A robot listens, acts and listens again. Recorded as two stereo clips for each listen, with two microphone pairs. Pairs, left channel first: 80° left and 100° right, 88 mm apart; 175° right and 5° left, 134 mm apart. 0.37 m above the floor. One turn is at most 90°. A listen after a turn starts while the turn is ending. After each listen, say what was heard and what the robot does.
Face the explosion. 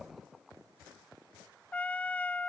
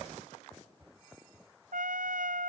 Keep listening.
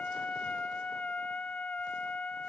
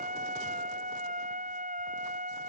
Keep listening.
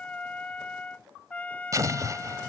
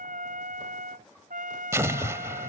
The explosion: 60° right. Turn 60° right.
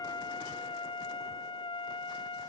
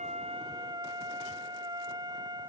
Facing where the explosion came from. I can't hear it now.